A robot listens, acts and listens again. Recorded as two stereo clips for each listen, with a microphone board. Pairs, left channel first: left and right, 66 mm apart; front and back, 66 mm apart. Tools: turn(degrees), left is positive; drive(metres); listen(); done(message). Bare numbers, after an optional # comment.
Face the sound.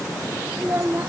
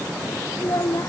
# The child speaking: 40° right.
turn(-40)
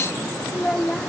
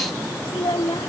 # The child speaking is now 10° left.
turn(10)
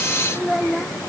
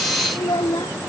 done("Facing the child speaking.")